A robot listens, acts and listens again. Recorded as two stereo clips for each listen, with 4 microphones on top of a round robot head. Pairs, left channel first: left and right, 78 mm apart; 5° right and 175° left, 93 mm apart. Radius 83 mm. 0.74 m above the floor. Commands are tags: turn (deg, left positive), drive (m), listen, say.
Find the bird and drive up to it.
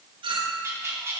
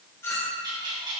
<turn deg="-145"/>
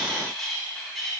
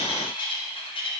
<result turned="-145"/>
<drive m="1.0"/>
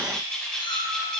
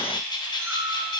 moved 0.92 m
<turn deg="10"/>
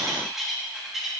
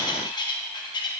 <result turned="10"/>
<drive m="1.0"/>
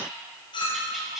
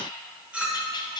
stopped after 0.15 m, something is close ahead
<say>Arrived at the bird, straight ahead.</say>